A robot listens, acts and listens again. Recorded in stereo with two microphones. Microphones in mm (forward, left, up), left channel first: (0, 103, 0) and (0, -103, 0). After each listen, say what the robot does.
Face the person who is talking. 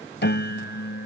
Keep listening.
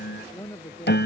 Turn 30° left.
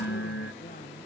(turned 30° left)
Keep listening.
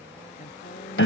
Turn 135° left.
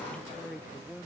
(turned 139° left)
Found it: a woman speaking, straight ahead.